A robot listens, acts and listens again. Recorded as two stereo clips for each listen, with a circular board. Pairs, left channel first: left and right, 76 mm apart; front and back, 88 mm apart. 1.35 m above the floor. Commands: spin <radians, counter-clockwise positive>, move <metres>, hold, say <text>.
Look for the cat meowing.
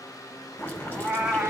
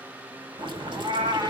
spin -2.97
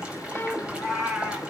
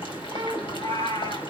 say Facing the cat meowing.